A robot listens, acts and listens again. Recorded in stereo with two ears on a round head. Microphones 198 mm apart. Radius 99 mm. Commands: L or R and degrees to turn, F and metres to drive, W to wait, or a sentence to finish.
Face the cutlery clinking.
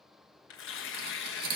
R45
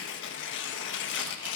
W
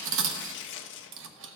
R80
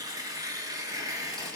W
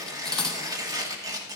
Facing the cutlery clinking.